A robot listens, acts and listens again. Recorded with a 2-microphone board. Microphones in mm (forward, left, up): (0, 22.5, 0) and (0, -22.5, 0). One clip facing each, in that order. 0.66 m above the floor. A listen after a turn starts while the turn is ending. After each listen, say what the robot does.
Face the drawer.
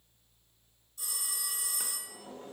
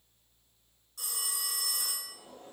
Turn 90° left.
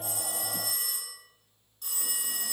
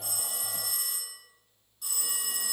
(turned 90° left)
Keep listening.
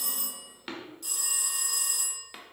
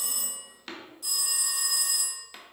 Turn 10° left.
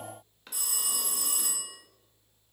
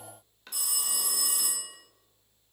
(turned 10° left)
Facing the drawer, under 1 m away.